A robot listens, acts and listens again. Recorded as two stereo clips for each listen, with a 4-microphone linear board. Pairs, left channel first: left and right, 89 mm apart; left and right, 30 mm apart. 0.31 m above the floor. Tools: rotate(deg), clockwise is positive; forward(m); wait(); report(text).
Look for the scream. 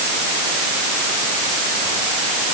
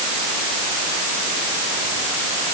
wait()
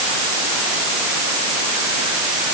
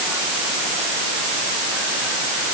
wait()
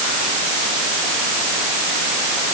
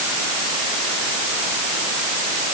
report("I can't make out a scream.")